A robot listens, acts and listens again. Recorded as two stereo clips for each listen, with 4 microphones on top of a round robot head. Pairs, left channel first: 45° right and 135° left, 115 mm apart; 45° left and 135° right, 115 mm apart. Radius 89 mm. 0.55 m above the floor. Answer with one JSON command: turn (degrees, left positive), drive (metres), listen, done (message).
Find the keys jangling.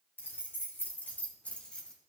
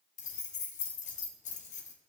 {"turn": 35}
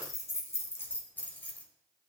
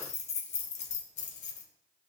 {"turn": 35}
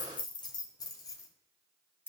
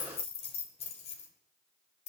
{"turn": 25}
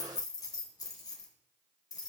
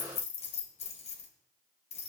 {"turn": 15}
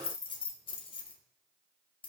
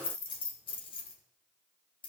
{"done": "Facing the keys jangling."}